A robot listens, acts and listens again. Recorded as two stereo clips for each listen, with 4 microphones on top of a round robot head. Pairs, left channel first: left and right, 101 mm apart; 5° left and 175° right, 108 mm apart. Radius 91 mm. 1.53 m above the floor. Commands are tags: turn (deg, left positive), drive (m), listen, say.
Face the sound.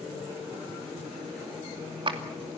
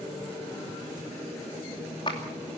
<turn deg="-55"/>
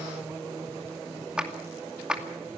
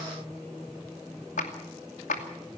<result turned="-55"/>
<turn deg="-10"/>
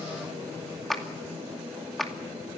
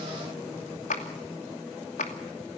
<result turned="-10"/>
<say>Found it: a clap, straight ahead, 2 to 4 m away.</say>